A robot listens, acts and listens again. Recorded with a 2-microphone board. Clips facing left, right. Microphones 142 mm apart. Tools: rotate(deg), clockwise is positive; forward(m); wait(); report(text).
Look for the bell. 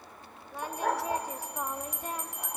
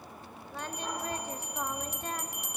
rotate(70)
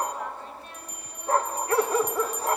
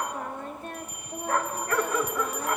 report("Facing the bell, under 1 m away.")